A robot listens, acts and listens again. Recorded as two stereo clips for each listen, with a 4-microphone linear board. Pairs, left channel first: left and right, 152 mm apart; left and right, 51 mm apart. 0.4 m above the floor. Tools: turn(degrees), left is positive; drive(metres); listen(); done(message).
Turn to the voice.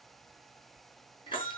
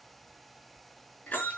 listen()
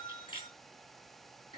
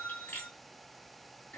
listen()
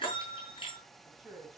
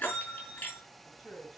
turn(degrees=30)
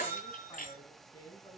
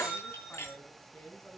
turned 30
turn(degrees=150)
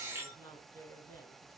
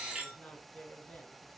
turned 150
turn(degrees=15)
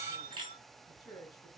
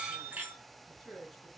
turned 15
done("Facing the woman speaking.")